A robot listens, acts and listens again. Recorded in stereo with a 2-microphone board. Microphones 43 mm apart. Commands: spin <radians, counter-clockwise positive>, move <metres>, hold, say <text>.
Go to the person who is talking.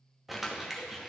hold
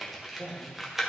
spin -1.05
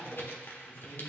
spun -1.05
move 1.0
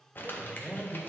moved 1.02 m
move 1.0
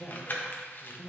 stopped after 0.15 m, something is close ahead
say Arrived at the man speaking, straight ahead.